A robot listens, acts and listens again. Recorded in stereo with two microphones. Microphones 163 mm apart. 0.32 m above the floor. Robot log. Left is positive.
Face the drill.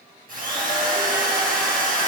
note: The drill: about 60° right or 120° right.
cmd yaw -60
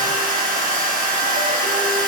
note: So it is at 60° right.
cmd yaw -60
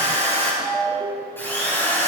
note: The drill is now 15° left.
cmd yaw +15
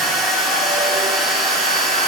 end: Facing the drill.